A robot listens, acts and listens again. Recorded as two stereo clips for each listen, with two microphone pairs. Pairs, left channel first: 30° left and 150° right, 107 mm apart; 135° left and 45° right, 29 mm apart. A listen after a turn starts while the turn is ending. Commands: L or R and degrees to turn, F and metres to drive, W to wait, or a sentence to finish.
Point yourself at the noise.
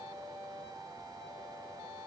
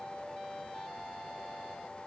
W
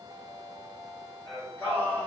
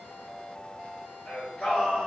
L95
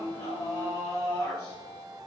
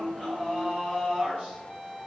R20
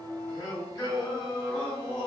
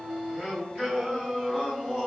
Found it: singing, straight ahead.